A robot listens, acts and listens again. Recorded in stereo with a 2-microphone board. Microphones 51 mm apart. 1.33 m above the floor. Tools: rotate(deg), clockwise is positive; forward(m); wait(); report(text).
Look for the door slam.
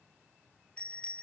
wait()
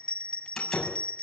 rotate(-30)
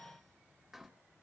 wait()
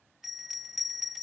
report("I heard a door slam, but can't make it out now. It was about 15° right or 135° left.")